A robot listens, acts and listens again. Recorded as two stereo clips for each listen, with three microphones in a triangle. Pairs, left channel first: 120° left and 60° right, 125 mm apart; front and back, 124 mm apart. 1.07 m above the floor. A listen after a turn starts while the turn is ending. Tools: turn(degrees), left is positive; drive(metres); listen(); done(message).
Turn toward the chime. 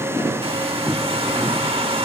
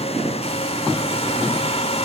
listen()
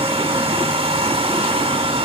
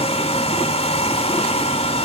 listen()
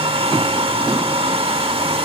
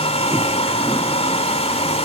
done("I can't make out a chime, only a hair dryer.")